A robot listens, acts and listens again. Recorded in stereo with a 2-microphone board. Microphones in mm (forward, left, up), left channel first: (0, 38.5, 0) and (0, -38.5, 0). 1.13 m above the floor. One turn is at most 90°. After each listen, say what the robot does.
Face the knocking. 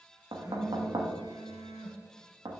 Turn 90° right.
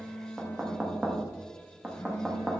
Turn 15° right.
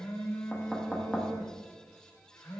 Found it: knocking, straight ahead.